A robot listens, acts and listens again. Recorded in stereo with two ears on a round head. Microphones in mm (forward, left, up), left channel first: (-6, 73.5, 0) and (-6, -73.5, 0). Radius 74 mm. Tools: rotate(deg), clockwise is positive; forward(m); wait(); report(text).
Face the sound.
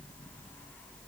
wait()
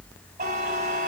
rotate(45)
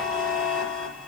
report("Facing the buzzer, over 4 m away.")